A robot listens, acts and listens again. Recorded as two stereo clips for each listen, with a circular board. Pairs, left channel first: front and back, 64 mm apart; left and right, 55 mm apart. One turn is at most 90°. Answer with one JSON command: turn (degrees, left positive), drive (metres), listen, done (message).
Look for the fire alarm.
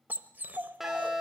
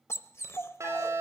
{"turn": -90}
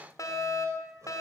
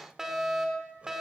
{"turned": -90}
{"turn": -10}
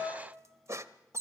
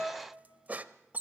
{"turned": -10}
{"done": "Found it: a fire alarm, straight ahead, over 4 m away."}